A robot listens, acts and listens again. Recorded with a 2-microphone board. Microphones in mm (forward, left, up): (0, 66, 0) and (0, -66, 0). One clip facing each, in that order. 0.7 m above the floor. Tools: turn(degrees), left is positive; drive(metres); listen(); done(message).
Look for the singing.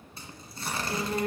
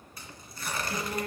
turn(degrees=60)
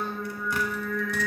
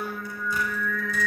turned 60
turn(degrees=25)
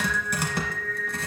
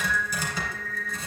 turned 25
done("Facing the singing, 2 to 4 m away.")